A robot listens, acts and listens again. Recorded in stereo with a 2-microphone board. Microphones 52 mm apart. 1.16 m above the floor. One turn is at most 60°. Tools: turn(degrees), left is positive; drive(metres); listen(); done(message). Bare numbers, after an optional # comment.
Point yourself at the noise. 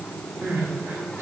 # The crying: about 55° right or 125° right.
turn(-55)
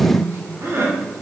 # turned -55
# So it is at 60° right.
turn(-60)
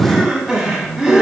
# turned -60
# The crying is now 10° right.
turn(-10)
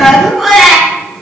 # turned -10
done("Facing the crying, 1 to 2 m away.")